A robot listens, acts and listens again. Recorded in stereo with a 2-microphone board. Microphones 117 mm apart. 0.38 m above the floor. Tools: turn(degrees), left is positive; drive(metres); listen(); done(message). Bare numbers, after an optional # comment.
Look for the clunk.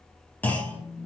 turn(30)
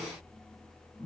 listen()
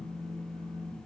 done("I heard a clunk, but can't make it out now. It was about 15° right or 135° left.")